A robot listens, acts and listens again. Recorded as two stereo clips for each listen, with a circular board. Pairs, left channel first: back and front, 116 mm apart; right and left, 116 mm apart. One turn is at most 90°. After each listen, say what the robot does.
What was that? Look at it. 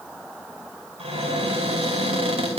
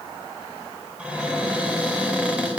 Turn 10° left.
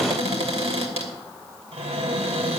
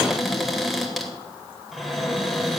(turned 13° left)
Facing the cupboard door.